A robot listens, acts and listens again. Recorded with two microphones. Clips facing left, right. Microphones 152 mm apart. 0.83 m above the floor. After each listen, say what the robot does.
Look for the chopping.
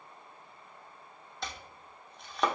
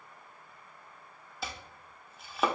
Turn 30° right.
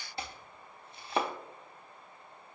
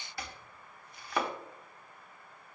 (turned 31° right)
Turn 25° left.
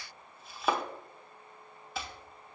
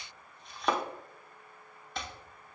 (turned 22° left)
Facing the chopping, under 1 m away.